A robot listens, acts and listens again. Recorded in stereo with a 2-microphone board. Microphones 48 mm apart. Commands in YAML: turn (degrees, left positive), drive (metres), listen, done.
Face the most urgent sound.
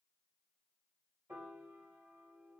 listen: true
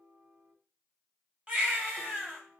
turn: -25
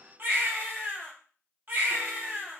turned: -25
turn: -130
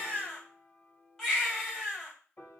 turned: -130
turn: 10
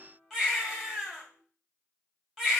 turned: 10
done: "Found it: a baby crying, straight ahead, 2 to 4 m away."